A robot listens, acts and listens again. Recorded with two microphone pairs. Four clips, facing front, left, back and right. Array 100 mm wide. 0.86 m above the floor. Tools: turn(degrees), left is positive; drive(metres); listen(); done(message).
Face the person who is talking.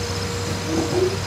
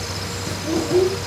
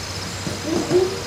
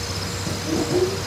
turn(degrees=150)
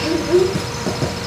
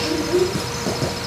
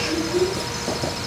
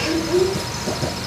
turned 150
done("Facing the child speaking, 2 to 4 m away.")